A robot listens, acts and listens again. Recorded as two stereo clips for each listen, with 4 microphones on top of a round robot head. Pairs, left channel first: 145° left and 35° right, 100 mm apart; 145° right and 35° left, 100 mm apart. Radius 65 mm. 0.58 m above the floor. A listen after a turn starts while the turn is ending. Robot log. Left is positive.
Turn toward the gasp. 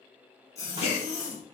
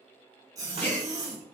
note: The gasp: 145° left.
cmd yaw +145
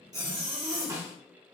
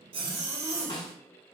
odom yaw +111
note: Nothing new. It was at 35° left.
cmd yaw +35
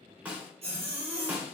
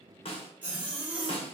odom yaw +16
note: Nothing new. It was at 15° left.
cmd yaw +15
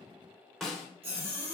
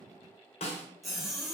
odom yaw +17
end: I heard a gasp from this way, but can't make it out now.